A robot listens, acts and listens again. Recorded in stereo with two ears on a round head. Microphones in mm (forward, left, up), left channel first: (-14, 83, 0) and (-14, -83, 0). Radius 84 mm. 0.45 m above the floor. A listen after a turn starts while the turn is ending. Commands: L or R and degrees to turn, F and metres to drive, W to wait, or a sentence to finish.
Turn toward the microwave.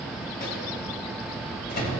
L55
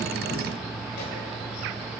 W
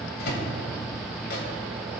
L65
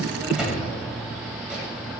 Found it: a microwave, straight ahead.